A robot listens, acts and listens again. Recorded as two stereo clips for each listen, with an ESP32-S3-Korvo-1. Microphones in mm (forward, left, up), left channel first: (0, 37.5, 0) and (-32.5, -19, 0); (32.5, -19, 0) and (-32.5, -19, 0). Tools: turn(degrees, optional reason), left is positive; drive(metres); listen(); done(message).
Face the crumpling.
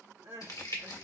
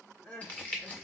turn(degrees=60, reason="The crumpling: 60° left.")
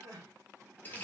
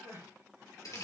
done("Facing the crumpling.")